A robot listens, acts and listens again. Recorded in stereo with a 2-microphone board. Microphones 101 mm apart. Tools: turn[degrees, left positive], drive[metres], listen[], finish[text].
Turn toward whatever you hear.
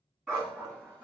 Action: turn[30]
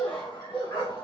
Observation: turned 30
Thought: So it is at 125° left.
Action: turn[125]
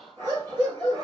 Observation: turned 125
Thought: The dog barking is now 45° right.
Action: turn[-45]
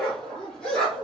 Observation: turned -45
Thought: The dog barking is now 10° left.
Action: turn[10]
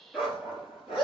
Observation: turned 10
Action: finish[Found it: a dog barking, straight ahead, 2 to 4 m away.]